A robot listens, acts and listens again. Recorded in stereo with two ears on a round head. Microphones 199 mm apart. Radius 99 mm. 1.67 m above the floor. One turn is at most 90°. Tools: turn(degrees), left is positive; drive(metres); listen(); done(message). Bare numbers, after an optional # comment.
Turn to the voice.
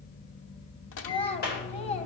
# The child speaking: about 30° left or 150° left.
turn(30)
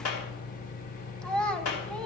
done("Found it: a child speaking, straight ahead.")